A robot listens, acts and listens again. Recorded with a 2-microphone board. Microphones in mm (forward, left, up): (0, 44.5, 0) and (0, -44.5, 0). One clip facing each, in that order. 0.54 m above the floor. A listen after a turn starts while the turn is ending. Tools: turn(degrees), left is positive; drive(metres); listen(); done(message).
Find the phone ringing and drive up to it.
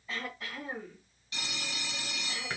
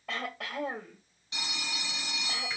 turn(degrees=-20)
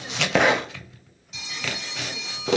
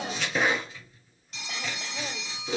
drive(metres=1.0)
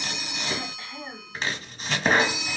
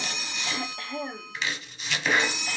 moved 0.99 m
drive(metres=1.0)
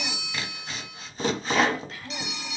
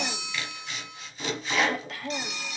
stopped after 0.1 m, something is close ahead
done("Arrived at the phone ringing, straight ahead.")